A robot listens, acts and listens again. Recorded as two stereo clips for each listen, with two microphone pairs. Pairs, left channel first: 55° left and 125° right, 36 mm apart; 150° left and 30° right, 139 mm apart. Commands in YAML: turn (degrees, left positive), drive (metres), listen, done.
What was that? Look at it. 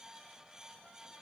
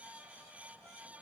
listen: true
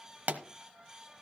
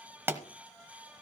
turn: -105
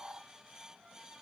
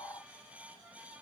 done: "Facing where the pop came from. I can't hear it now."